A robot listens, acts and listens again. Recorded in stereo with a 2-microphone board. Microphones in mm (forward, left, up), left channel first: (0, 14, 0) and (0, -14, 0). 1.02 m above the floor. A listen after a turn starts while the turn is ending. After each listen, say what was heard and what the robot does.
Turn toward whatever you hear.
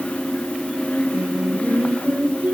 The singing: about 60° right or 120° right. Turn 60° right.
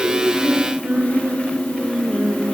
So it is at 70° right. Turn 70° right.
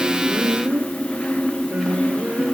The singing is now 55° right. Turn 55° right.
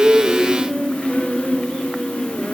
The singing is now 10° left. Turn 10° left.
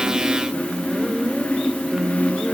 Facing the singing.